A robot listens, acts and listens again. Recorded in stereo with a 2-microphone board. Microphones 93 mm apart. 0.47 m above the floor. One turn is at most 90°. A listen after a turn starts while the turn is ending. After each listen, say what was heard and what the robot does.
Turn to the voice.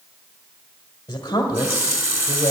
The woman speaking: about 40° left or 140° left. Turn 40° left.
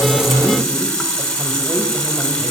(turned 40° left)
Keep listening.
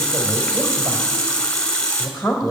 Found it: a woman speaking, straight ahead.